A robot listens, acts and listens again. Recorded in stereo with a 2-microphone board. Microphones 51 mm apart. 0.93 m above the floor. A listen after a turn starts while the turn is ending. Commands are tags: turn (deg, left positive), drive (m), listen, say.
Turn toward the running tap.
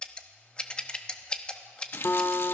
<turn deg="50"/>
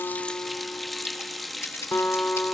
<say>Found it: a running tap, straight ahead.</say>